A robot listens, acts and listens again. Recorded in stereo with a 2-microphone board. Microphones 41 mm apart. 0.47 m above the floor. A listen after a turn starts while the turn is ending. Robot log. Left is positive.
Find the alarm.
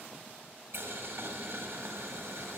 cmd idle
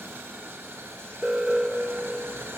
cmd yaw -30
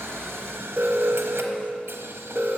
note: So it is at 135° right.
cmd yaw -135
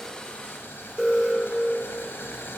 end: Found it: an alarm, straight ahead, under 1 m away.